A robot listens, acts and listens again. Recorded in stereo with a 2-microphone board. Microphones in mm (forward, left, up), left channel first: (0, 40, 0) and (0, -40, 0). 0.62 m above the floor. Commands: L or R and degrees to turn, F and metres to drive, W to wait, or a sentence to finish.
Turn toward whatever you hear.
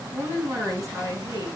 R45
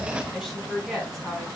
Found it: a woman speaking, straight ahead.